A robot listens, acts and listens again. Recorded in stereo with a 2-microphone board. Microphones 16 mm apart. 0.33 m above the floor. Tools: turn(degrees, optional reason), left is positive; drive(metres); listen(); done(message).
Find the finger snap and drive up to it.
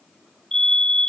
listen()
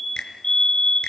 turn(degrees=60, reason="The finger snap: about 60° left or 120° left.")
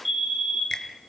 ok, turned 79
listen()
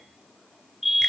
listen()
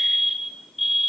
done("I heard a finger snap, but can't make it out now. It was about 20° right or 45° left. I did not reach it.")